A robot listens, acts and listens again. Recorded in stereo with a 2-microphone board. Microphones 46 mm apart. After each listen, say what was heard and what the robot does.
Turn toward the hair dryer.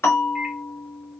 Keep listening.
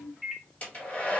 The hair dryer: about 30° left or 150° left. Turn 30° left.
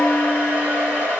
So it is at 120° left. Turn 120° left.
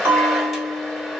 Facing the hair dryer.